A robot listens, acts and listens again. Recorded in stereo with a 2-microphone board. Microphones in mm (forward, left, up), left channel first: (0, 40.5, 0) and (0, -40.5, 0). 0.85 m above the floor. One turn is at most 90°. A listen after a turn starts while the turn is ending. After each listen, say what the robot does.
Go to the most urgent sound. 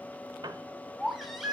Turn 30° right.
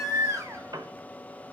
Turn 90° right.
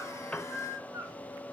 Turn 35° right.
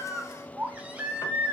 Turn 15° right.
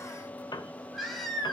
Drive 1.0 m forward.
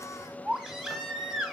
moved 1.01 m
Drive 1.0 m forward.
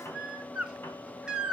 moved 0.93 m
Turn 10° right.
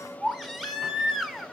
Drive 1.0 m forward.
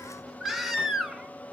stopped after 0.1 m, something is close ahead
Arrived at the baby crying, straight ahead.